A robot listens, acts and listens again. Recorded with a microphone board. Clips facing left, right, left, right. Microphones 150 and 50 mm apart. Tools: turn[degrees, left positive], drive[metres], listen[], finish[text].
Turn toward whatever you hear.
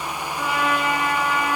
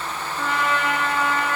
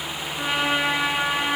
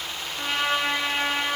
Action: turn[30]
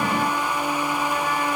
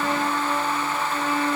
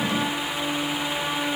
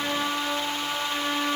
Thought: So it is at 20° right.
Action: turn[-20]
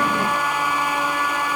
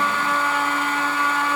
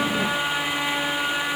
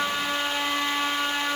Action: finish[Facing the trumpet, 1 to 2 m away.]